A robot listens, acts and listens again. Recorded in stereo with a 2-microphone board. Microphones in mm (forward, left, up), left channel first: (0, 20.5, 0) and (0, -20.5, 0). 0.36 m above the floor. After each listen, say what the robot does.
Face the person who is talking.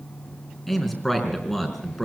Turn 30° left.
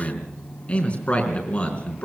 Turn 145° left.
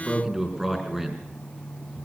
Turn 10° right.
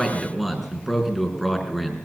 Found it: a man speaking, straight ahead, over 4 m away.